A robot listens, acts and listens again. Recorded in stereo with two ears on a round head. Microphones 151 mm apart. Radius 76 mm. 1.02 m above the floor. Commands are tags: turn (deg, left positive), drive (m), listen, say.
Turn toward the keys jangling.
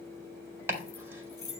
<turn deg="20"/>
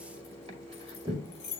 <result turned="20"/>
<turn deg="135"/>
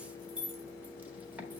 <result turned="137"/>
<turn deg="-10"/>
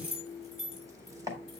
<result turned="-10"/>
<say>Facing the keys jangling, 2 to 4 m away.</say>